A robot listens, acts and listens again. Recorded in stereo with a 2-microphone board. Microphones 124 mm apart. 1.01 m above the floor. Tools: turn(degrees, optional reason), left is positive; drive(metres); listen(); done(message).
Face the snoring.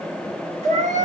listen()
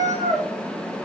listen()
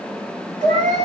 done("I can't make out snoring to turn to.")